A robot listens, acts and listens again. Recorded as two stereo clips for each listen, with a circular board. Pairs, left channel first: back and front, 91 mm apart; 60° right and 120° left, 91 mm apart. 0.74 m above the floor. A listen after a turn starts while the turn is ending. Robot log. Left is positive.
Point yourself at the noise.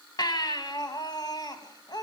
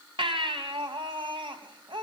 note: The baby crying: 140° left.
cmd yaw +140
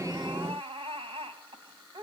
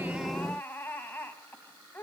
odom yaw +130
note: The baby crying is now 10° left.
cmd yaw +10
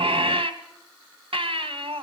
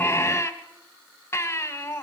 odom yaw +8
end: Found it: a baby crying, straight ahead.